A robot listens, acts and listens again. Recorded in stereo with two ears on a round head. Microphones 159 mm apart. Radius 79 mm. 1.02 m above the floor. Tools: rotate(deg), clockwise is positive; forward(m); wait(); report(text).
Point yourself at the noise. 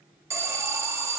rotate(15)
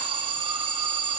rotate(150)
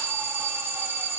rotate(10)
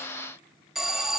report("Facing the alarm.")